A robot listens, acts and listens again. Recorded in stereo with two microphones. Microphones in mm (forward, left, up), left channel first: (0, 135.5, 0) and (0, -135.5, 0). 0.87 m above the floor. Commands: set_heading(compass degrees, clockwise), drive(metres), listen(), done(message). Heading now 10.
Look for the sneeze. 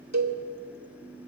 listen()
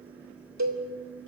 listen()
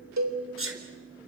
set_heading(60)
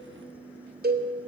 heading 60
listen()
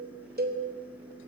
done("I heard a sneeze, but can't make it out now. It was about straight ahead or 80° right.")